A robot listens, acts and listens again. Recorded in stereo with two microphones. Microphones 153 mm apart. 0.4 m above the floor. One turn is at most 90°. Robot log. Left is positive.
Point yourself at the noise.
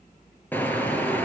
cmd yaw +30
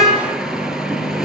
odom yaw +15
end: Facing the car horn, 2 to 4 m away.